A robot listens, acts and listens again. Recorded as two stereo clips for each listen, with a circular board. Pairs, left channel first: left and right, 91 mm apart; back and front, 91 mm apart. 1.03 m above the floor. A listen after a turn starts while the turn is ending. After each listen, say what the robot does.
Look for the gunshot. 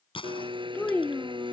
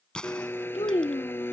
Turn 100° left.
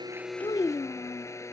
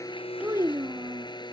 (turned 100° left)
I heard a gunshot from this way, but can't make it out now.